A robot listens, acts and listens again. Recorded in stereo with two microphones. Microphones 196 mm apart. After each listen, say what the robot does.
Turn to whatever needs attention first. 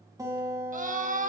Turn 40° right.
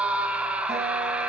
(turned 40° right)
Facing the scream, 1 to 2 m away.